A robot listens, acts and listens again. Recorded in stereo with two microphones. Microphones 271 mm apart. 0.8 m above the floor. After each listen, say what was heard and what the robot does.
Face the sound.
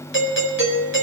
The doorbell: about 50° left or 130° left. Turn 50° left.
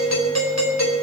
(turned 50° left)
So it is at 80° left. Turn 80° left.
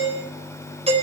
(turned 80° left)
The doorbell is now 25° right. Turn 25° right.
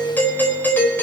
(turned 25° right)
The doorbell is now 10° left. Turn 10° left.
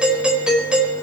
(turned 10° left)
Found it: a doorbell, straight ahead.